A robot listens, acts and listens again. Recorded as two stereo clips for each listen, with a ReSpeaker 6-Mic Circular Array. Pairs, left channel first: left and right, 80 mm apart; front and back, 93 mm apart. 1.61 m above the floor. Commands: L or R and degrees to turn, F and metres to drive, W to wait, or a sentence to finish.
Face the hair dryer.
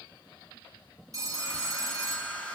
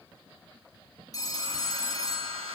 L165
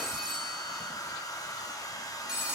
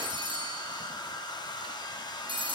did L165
L45
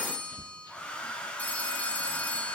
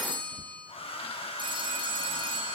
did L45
L15
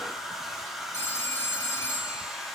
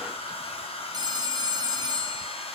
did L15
Found it: a hair dryer, straight ahead.